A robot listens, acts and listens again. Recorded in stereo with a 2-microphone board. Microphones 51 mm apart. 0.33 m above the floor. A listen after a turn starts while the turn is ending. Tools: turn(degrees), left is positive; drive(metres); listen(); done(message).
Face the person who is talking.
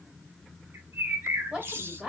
turn(degrees=-30)
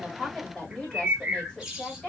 turn(degrees=25)
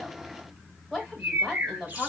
turn(degrees=10)
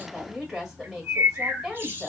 done("Found it: a woman speaking, straight ahead, 2 to 4 m away.")